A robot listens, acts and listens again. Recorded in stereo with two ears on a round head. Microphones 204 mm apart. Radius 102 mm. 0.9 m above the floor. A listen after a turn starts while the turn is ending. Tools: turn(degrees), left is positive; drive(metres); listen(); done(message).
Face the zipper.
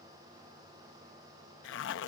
turn(degrees=55)
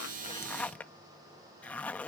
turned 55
done("Found it: a zipper, straight ahead.")